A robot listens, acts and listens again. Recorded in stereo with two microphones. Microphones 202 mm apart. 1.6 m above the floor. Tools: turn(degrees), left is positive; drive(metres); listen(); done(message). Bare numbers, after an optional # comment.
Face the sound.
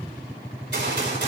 # The gunshot: about 65° right or 115° right.
turn(-65)
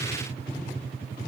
listen()
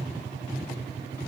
done("I heard a gunshot, but can't make it out now. It was about straight ahead or 50° right.")